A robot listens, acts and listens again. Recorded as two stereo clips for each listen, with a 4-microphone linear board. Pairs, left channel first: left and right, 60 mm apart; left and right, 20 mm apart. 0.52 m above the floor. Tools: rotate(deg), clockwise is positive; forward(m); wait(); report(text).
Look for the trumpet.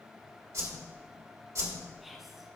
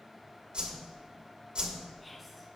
wait()
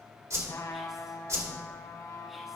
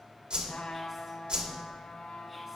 rotate(-90)
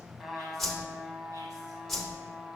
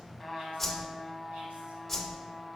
report("Found it: a trumpet, straight ahead, 1 to 2 m away.")